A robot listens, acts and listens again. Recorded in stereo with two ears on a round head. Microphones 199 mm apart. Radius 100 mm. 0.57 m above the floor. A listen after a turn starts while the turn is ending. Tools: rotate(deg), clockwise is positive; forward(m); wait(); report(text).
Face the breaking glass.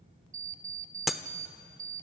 rotate(-30)
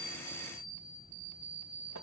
wait()
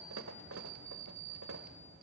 report("I heard breaking glass, but can't make it out now. It was about 30° right or 150° left.")